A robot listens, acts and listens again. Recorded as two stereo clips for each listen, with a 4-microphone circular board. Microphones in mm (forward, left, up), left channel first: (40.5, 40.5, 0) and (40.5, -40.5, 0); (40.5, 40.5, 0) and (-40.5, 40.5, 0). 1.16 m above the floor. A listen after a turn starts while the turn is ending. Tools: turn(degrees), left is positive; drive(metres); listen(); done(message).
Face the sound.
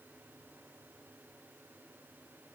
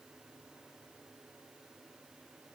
listen()
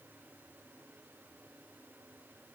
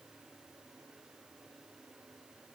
listen()
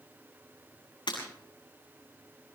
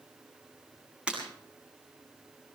turn(degrees=105)
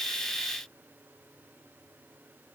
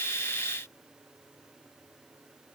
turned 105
done("Facing where the breaking glass came from. I can't hear it now.")